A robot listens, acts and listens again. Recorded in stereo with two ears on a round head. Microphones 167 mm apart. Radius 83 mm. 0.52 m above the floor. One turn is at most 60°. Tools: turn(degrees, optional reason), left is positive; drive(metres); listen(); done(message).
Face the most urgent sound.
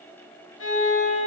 listen()
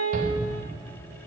turn(degrees=-50, reason="The shout: about 50° right or 130° right.")
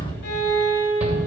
turn(degrees=-10, reason="So it is at 10° right.")
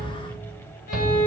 done("Facing the shout.")